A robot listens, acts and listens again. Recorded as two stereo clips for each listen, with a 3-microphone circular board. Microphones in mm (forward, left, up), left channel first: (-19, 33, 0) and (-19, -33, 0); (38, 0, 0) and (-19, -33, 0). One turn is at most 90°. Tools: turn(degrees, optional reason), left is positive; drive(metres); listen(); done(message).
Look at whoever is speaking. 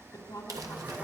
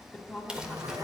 turn(degrees=90, reason="The woman speaking: 110° left.")
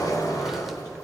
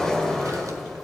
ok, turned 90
turn(degrees=20, reason="Nothing new. It was at 20° left.")
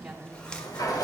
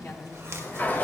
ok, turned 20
turn(degrees=-10, reason="The woman speaking is now 10° right.")
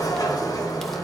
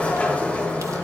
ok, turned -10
listen()
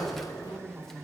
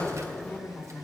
done("Facing the woman speaking, 2 to 4 m away.")